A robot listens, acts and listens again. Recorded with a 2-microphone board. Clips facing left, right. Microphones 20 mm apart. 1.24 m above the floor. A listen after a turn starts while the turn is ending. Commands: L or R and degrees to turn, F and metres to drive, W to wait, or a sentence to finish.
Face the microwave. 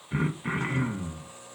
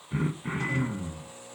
R75
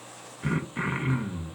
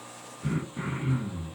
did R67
W
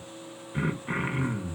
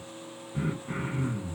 R40
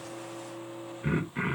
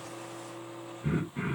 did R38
Found it: a microwave, straight ahead.